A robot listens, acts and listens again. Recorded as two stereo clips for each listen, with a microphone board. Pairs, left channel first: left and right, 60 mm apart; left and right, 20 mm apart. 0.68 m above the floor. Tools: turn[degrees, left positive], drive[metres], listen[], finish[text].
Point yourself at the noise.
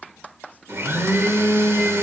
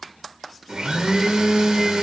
Thought: The blender: about 50° right or 130° right.
Action: turn[-50]
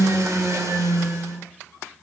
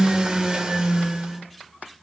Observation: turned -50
Thought: So it is at 80° right.
Action: turn[-80]
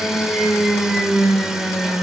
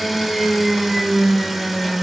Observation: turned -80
Thought: The blender is now 10° right.
Action: turn[-10]
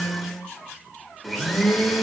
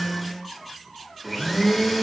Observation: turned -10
Action: finish[Facing the blender.]